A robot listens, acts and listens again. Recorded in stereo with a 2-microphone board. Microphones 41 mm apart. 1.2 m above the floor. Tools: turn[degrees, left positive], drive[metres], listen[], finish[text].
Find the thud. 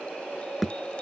Action: turn[30]
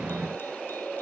Action: listen[]
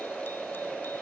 Action: finish[I heard a thud, but can't make it out now. It was about 30° right or 150° left.]